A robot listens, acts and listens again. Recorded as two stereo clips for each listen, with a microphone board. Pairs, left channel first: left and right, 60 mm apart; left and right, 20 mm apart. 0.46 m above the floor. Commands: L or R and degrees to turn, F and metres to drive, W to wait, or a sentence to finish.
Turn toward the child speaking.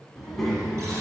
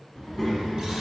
L30
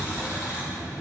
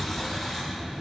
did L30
R30
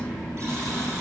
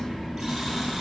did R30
Found it: a child speaking, straight ahead.